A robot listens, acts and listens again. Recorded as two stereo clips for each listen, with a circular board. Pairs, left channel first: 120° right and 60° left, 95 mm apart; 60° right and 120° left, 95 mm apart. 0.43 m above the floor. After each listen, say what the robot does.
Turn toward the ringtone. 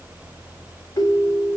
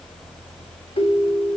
Turn 75° right.
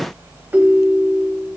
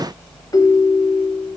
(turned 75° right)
Turn 10° right.
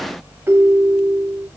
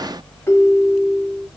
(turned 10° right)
Facing the ringtone.